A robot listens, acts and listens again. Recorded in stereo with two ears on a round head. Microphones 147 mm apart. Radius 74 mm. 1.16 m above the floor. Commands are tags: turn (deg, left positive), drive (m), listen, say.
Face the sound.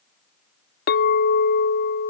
<turn deg="60"/>
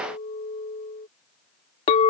<turn deg="40"/>
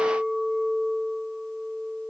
<say>Facing the clink.</say>